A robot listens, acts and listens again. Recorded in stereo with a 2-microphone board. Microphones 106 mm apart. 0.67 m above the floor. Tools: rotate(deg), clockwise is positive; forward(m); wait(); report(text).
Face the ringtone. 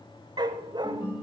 rotate(-45)
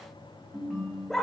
report("Facing the ringtone.")